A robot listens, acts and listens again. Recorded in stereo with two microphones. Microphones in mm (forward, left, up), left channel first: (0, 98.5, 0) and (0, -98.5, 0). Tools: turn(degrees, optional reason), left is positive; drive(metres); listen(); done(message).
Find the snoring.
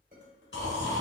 turn(degrees=70, reason="The snoring: about 70° left or 110° left.")
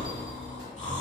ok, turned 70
turn(degrees=35, reason="So it is at 35° left.")
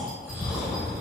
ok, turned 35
done("Facing the snoring.")